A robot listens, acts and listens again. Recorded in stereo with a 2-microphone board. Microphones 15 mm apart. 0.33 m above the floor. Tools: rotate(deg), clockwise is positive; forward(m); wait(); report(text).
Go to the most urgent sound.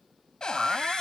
rotate(20)
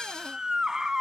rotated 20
rotate(140)
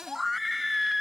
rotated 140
rotate(10)
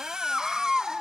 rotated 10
forward(1.0)
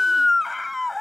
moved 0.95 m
forward(1.0)
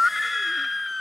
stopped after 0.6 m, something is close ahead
rotate(10)
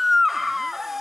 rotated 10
report("Arrived at the scream, straight ahead.")